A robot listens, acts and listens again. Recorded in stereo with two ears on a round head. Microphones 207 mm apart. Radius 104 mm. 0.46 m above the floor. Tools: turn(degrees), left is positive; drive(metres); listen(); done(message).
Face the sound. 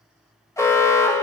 turn(degrees=30)
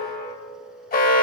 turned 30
turn(degrees=135)
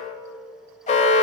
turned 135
turn(degrees=35)
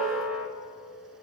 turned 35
done("Facing the alarm, 1 to 2 m away.")